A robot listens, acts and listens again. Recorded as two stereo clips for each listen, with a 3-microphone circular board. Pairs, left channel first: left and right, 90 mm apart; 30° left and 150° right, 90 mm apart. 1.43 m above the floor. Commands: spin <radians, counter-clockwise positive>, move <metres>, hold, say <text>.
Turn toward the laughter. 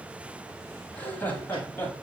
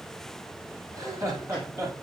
spin 2.71
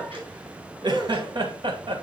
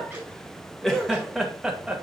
spin -1.22
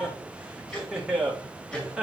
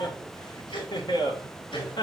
spin -0.17
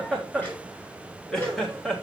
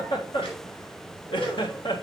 say Facing the laughter.